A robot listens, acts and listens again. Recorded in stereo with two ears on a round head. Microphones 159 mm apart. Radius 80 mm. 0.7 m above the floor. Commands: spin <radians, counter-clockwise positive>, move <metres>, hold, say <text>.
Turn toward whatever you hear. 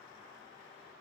hold
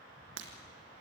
spin -1.57
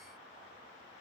say Facing where the breaking glass came from. I can't hear it now.